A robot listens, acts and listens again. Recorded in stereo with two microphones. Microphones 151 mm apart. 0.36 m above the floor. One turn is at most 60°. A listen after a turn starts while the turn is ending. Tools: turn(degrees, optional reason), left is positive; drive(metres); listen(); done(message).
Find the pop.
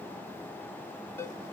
listen()
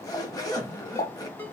turn(degrees=55, reason="The pop: about 55° left or 125° left.")
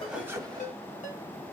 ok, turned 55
listen()
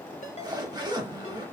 done("I heard a pop, but can't make it out now. It was about straight ahead or 70° left.")